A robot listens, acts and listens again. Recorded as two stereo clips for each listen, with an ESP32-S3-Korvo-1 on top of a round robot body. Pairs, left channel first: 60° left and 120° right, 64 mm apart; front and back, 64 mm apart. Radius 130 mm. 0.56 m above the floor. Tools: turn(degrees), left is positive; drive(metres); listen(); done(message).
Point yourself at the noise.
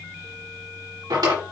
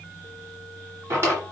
turn(degrees=-130)
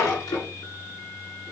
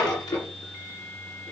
turn(degrees=15)
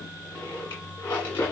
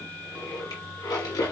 done("Found it: a drawer, straight ahead.")